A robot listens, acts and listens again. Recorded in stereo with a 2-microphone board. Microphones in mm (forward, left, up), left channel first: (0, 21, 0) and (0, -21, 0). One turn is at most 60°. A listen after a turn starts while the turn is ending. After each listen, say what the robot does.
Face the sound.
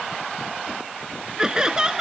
Turn 15° right.
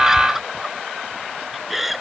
Found it: laughter, straight ahead.